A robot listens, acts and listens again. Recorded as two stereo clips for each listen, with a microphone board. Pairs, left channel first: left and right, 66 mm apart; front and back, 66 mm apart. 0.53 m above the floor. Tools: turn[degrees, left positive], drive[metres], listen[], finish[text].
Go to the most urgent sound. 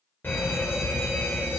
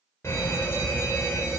Thought: The fire alarm: 40° left.
Action: turn[40]
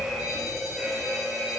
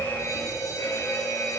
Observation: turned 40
Action: drive[1.0]
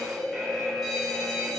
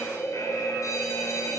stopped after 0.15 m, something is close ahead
Action: finish[Blocked. The fire alarm is further on, straight ahead.]